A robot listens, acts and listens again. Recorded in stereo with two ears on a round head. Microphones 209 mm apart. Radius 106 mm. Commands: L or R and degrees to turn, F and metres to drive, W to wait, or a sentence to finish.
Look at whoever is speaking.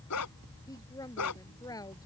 L15
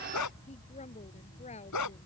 W
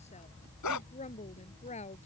L150
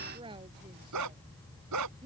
R20
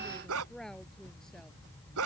W
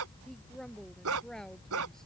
Facing the woman speaking.